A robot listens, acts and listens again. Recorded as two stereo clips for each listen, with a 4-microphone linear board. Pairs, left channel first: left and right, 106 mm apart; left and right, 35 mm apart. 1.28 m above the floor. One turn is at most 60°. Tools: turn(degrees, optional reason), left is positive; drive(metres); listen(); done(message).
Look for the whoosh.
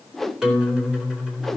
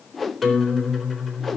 turn(degrees=30)
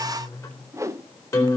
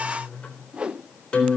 turn(degrees=-25, reason="So it is at 25° right.")
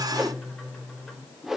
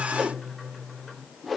done("Found it: a whoosh, straight ahead, under 1 m away.")